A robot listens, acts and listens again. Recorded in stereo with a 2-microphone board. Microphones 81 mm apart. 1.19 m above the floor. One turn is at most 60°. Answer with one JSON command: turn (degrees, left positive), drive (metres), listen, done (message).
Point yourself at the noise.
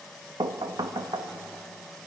{"turn": -60}
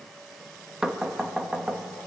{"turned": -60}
{"done": "Found it: knocking, straight ahead, 1 to 2 m away."}